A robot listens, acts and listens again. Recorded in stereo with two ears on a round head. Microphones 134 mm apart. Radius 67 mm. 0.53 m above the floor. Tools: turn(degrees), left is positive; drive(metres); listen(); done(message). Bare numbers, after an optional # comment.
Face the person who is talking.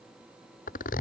listen()
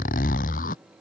listen()
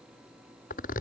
done("I can't make out anyone speaking to turn to.")